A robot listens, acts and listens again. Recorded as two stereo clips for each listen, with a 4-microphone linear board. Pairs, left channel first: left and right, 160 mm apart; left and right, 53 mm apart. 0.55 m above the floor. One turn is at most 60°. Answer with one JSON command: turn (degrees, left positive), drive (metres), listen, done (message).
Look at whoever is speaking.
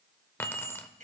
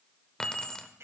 {"listen": true}
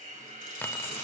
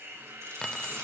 {"listen": true}
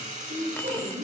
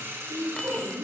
{"turn": -60}
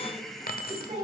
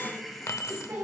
{"turn": -35}
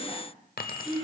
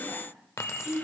{"done": "Facing the woman speaking, over 4 m away."}